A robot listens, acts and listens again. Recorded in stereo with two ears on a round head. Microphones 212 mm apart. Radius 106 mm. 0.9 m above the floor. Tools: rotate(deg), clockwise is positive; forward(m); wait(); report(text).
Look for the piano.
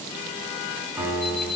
rotate(30)
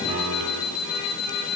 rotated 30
wait()
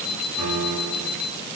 rotate(140)
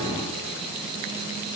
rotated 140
wait()
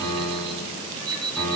rotate(-10)
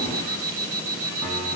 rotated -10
wait()
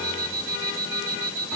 wait()
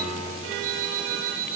report("Facing the piano, over 4 m away.")